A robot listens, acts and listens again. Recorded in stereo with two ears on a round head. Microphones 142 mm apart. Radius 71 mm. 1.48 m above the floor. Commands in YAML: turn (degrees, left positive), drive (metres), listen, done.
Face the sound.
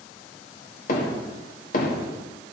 turn: 50
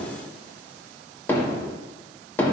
turn: 15
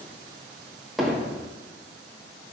done: "Found it: hammering, straight ahead."